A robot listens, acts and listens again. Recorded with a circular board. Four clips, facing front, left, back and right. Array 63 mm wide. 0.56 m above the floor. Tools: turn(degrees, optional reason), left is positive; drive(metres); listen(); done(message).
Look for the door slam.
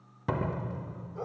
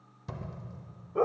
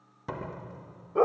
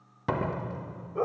turn(degrees=-75, reason="The door slam: 75° right.")
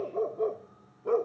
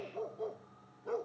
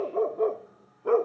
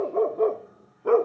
done("I heard a door slam from this way, but can't make it out now.")